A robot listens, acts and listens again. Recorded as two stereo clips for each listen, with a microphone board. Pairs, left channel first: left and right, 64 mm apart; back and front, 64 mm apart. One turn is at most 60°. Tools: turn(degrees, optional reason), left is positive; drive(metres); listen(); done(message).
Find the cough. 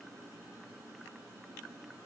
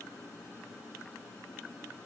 listen()
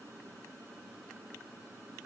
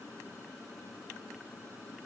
listen()
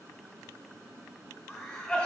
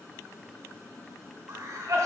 turn(degrees=25, reason="The cough: 25° left.")
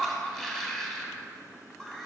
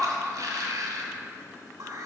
turn(degrees=10, reason="The cough is now 10° left.")
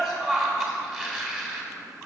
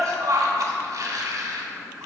done("Facing the cough.")